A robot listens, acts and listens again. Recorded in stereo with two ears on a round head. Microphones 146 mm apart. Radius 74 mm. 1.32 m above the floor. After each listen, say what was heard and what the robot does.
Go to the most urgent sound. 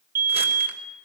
The fire alarm: about 60° right or 120° right. Turn 60° right.
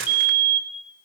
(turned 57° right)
So it is at 55° right. Turn 55° right.
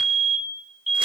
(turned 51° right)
Drive 1.0 m forward.
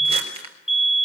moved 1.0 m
Drive 1.0 m forward.
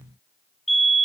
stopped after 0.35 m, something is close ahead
Arrived at the fire alarm, straight ahead.